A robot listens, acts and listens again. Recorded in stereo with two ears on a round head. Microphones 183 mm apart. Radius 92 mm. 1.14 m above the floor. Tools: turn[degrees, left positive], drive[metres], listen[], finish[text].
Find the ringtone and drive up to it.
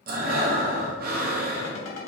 Thought: The ringtone: about 60° left or 120° left.
Action: turn[60]
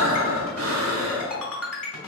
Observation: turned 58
Thought: So it is at 10° left.
Action: turn[10]
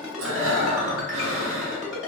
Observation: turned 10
Action: drive[1.0]
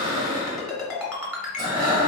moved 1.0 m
Action: drive[1.0]
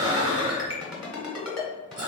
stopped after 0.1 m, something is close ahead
Action: finish[Arrived at the ringtone, straight ahead.]